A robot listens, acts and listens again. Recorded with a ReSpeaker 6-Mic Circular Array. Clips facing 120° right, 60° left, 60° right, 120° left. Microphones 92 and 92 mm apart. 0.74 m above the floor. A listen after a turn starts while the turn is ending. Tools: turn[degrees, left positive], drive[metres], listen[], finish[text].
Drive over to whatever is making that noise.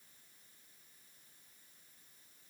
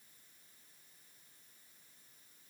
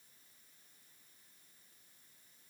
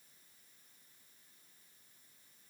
Action: listen[]
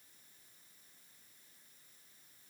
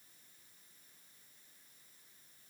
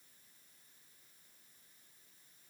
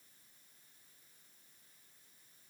Action: listen[]
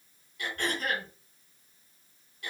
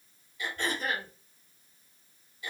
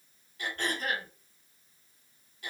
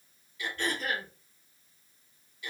Thought: The throat clearing: 95° right.
Action: turn[-95]
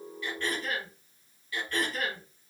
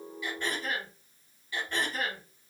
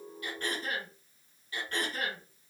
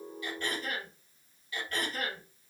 Action: drive[1.0]
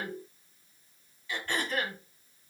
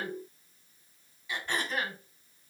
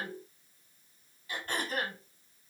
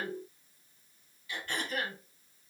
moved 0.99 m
Thought: The throat clearing is now 15° right.
Action: turn[-15]
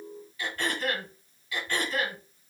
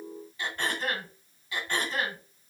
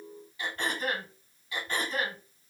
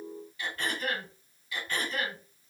Action: drive[1.0]
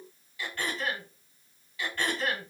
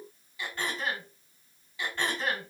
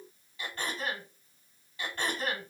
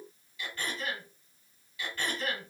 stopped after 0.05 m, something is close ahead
Thought: The throat clearing is now 10° right.
Action: turn[-10]
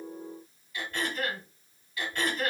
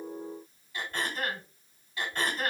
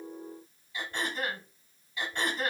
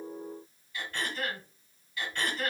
Action: finish[I am next to the throat clearing.]